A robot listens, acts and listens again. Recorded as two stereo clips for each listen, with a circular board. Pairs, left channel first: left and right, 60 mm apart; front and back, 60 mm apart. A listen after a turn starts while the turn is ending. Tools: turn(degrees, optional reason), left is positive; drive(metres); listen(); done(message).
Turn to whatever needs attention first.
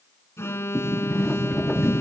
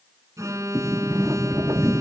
turn(degrees=140, reason="The alarm: 140° left.")
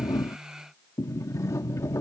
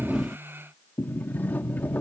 listen()
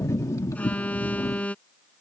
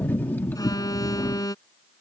turn(degrees=20, reason="The alarm is now 20° left.")
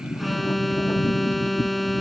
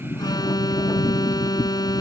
done("Found it: an alarm, straight ahead.")